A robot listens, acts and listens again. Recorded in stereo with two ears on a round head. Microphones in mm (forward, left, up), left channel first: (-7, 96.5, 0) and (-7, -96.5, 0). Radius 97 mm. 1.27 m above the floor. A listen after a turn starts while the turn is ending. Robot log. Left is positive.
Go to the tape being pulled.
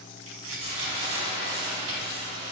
cmd yaw -90
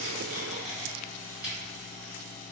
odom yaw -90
cmd fwd 1.0
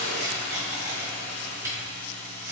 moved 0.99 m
note: The tape being pulled is now 15° right.
cmd yaw -15
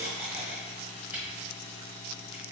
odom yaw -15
cmd fwd 1.0
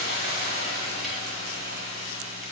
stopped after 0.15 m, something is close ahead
cmd idle
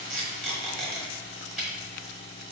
end: I am next to the tape being pulled.